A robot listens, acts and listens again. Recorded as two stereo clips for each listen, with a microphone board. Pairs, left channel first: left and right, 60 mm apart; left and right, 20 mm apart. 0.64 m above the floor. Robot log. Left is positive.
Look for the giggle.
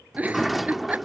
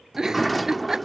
note: The giggle: about 25° right or 155° right.
cmd yaw -25
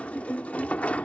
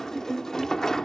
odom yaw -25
cmd idle
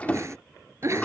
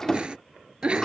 note: So it is at 130° right.
cmd yaw -130
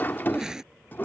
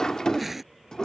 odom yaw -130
note: The giggle is now 10° right.
cmd yaw -10
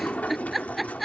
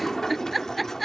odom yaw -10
end: Facing the giggle.